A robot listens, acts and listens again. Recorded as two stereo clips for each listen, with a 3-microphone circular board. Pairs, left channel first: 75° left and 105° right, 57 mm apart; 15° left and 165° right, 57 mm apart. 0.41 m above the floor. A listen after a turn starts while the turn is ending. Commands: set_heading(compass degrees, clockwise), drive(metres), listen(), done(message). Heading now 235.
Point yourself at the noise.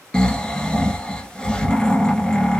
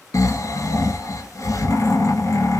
done("Found it: snoring, straight ahead, 1 to 2 m away.")